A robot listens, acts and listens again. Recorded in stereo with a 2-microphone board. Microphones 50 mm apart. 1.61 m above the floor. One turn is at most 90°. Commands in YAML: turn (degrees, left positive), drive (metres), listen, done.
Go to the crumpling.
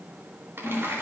turn: -60
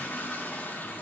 listen: true
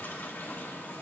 listen: true
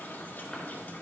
done: "I heard crumpling, but can't make it out now. It was about straight ahead or 60° right. I did not reach it."